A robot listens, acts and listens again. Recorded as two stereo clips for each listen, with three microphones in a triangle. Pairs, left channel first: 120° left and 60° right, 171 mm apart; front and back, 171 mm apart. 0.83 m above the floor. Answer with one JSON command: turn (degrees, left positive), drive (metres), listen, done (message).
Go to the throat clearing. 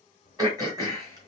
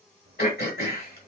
{"drive": 1.0}
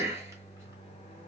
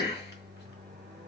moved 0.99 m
{"turn": 10}
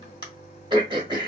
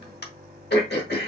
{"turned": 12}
{"drive": 1.0}
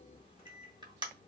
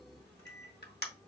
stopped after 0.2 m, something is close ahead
{"done": "I am next to the throat clearing."}